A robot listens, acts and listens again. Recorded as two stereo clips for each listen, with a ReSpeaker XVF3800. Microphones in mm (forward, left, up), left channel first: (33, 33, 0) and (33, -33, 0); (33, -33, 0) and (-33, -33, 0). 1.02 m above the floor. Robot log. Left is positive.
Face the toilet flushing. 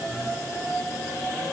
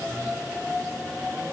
cmd idle
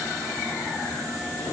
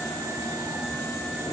cmd idle
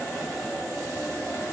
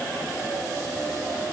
end: I can't make out a toilet flushing to turn to.